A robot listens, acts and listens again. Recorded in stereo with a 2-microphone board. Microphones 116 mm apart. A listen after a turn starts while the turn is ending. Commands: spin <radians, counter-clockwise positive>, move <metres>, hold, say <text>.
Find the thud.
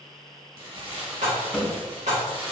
spin 0.52
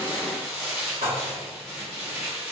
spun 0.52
hold
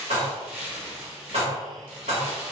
say I heard a thud, but can't make it out now. It was about 25° right or 145° left.